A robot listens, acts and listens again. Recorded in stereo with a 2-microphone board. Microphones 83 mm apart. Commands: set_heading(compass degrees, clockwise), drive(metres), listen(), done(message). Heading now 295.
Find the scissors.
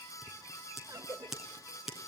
set_heading(325)
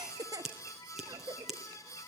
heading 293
set_heading(323)
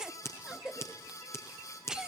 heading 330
set_heading(300)
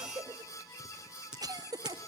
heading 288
set_heading(298)
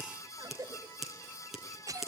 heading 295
done("Found it: scissors, straight ahead.")